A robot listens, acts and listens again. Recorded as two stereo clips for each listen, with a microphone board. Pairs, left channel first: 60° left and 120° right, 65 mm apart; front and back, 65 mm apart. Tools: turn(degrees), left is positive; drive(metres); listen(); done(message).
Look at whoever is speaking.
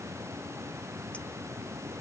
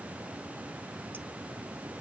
listen()
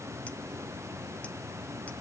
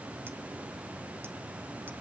listen()
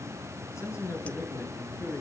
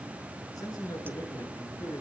turn(degrees=15)
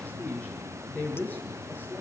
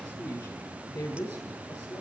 done("Facing the man speaking, over 4 m away.")